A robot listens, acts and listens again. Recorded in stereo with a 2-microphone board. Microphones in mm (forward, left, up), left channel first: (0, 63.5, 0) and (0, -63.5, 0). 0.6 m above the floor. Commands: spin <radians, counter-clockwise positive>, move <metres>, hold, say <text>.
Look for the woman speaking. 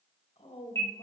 spin 0.96
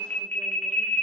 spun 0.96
hold
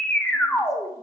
hold
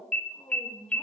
spin 0.61
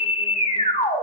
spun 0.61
hold
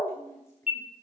spin 0.44
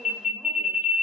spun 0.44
hold
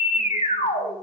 hold
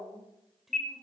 say Facing the woman speaking, 2 to 4 m away.